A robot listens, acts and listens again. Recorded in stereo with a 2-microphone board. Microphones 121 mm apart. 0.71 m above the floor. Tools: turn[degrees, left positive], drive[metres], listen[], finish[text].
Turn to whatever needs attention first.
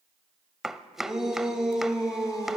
Action: turn[-30]
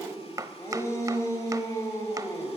Thought: So it is at 25° left.
Action: turn[25]
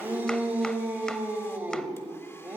Thought: The shout is now 15° right.
Action: turn[-15]
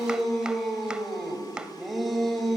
Action: finish[Found it: a shout, straight ahead, 2 to 4 m away.]